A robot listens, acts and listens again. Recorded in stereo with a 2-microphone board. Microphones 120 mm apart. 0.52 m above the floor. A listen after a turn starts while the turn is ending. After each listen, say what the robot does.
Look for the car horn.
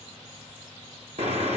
Turn 65° right.
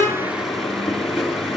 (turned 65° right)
Facing the car horn.